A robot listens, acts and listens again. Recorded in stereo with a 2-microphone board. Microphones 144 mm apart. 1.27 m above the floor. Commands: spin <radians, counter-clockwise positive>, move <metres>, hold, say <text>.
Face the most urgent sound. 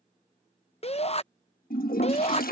spin 0.70
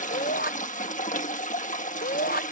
spin 1.66
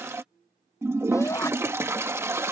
spin 0.35
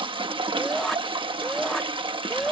say Facing the shout.